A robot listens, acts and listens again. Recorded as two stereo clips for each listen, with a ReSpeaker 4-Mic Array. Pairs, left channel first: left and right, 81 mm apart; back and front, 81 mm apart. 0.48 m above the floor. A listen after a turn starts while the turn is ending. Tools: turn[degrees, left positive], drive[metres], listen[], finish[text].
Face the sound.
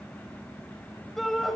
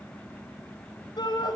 Thought: The shout: 175° left.
Action: turn[175]
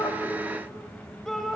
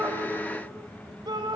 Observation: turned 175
Action: finish[Facing the shout.]